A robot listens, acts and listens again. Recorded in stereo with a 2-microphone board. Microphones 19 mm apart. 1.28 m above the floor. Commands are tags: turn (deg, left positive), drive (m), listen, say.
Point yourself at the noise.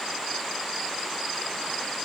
<listen/>
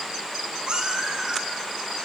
<turn deg="-55"/>
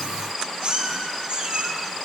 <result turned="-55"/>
<turn deg="-50"/>
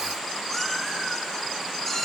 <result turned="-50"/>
<turn deg="15"/>
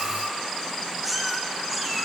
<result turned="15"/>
<say>Facing the cat meowing.</say>